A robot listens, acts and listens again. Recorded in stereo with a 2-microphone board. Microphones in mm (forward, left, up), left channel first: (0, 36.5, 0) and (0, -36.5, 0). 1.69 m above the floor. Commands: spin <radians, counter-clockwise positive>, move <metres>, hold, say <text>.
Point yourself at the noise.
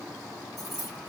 spin -0.52
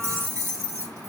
spin -2.36
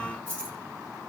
spin 0.35
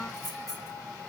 say Found it: keys jangling, straight ahead, 2 to 4 m away.